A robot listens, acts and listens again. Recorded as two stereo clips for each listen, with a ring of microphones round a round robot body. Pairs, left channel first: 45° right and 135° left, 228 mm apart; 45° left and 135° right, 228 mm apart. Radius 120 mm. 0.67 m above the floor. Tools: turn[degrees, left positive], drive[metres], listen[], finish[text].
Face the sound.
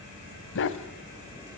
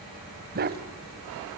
Thought: The dog barking: 85° right.
Action: turn[-85]
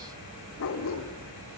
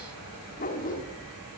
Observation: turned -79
Thought: The dog barking is now 10° right.
Action: turn[-10]
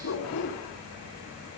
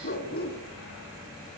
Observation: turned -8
Action: finish[Found it: a dog barking, straight ahead.]